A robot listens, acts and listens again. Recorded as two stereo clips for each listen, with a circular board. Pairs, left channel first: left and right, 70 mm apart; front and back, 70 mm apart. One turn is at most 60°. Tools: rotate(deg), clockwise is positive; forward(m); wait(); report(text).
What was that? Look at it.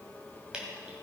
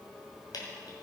rotate(10)
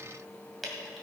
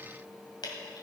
report("Facing the dripping.")